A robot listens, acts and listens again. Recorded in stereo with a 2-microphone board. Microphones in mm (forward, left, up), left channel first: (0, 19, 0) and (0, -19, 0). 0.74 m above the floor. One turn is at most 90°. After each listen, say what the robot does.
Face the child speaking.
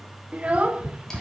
Turn 35° right.
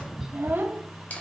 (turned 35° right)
Turn 90° right.
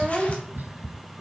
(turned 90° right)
Turn 15° right.
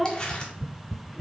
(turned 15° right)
Found it: a child speaking, straight ahead.